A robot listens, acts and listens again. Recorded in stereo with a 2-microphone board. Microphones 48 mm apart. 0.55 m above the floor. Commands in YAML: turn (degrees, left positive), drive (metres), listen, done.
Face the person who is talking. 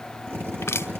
listen: true
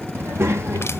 turn: -70
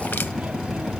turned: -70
turn: -25
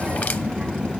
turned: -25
turn: -15
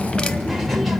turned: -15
done: "Found it: a child speaking, straight ahead, 1 to 2 m away."